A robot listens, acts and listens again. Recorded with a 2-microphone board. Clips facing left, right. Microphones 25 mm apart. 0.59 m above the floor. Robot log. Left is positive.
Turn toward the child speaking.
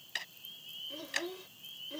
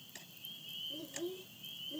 note: The child speaking: about 65° left or 115° left.
cmd yaw +65
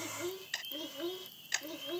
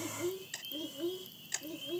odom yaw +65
note: So it is at 45° left.
cmd yaw +45
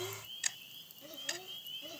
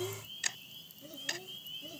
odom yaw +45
note: The child speaking is now 25° left.
cmd yaw +25
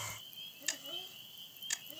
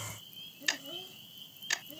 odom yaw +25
end: Facing the child speaking.